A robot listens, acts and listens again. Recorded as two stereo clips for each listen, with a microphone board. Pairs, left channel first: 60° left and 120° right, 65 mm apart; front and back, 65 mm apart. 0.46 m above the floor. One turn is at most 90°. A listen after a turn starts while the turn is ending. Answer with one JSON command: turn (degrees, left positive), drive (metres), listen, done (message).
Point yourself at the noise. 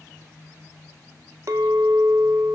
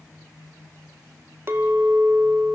{"turn": -90}
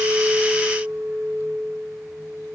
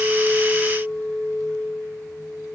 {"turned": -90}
{"turn": -85}
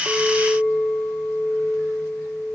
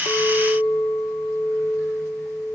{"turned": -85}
{"done": "Found it: a clink, straight ahead."}